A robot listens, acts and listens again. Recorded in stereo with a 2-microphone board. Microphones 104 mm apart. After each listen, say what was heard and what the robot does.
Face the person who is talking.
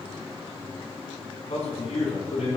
The man speaking: about 70° left or 110° left. Turn 70° left.
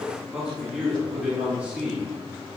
So it is at 15° right. Turn 15° right.
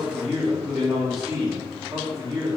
The man speaking is now 10° right. Turn 10° right.
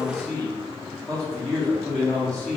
Found it: a man speaking, straight ahead, 2 to 4 m away.